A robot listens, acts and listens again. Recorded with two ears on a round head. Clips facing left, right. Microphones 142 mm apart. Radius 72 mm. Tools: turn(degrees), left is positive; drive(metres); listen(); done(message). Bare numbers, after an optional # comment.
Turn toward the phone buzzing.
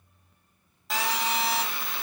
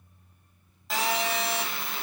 turn(30)
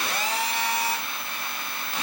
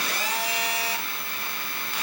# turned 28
# So it is at 150° left.
turn(150)
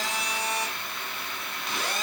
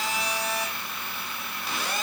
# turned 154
done("Found it: a phone buzzing, straight ahead, 2 to 4 m away.")